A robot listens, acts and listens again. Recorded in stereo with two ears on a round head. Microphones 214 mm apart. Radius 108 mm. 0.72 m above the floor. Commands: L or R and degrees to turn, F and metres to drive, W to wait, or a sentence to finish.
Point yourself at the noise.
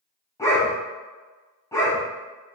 L30
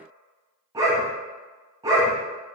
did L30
R15
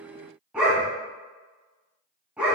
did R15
Found it: a dog barking, straight ahead.